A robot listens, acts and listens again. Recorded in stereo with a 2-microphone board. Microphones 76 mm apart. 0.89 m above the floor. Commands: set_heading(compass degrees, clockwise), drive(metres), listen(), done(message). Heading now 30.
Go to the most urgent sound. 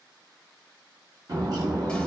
listen()
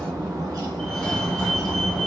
set_heading(0)
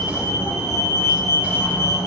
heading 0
set_heading(220)
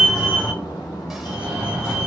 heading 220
set_heading(235)
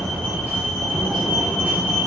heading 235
drive(1.0)
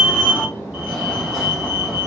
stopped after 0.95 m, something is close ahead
done("Arrived at the fire alarm, straight ahead.")